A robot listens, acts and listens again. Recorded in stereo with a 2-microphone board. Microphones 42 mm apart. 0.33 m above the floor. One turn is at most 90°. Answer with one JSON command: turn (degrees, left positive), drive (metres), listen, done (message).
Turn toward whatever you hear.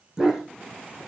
{"turn": -30}
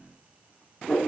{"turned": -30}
{"turn": 25}
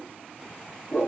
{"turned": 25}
{"turn": 20}
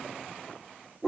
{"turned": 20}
{"done": "Found it: a dog barking, straight ahead."}